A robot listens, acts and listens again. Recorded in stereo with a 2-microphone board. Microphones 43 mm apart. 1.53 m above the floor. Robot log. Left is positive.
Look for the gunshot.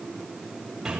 cmd idle
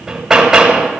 cmd idle
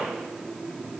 end: I can't make out a gunshot, only hammering.